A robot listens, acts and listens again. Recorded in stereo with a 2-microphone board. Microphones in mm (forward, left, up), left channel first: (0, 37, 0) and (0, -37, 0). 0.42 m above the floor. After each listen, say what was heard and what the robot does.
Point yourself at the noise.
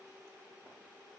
Keep listening.
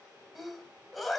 Turn 30° left.
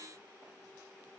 Keep listening.
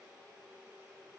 I heard a sneeze, but can't make it out now. It was about 30° right or 150° left.